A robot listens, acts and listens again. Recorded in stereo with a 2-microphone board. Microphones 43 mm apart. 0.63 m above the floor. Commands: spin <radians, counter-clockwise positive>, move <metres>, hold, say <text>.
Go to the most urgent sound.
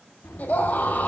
spin 0.70
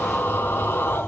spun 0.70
spin 1.75
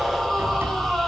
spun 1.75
move 1.0
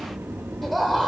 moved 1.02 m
move 1.0
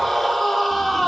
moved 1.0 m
move 1.0
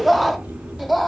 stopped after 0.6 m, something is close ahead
say I am next to the scream.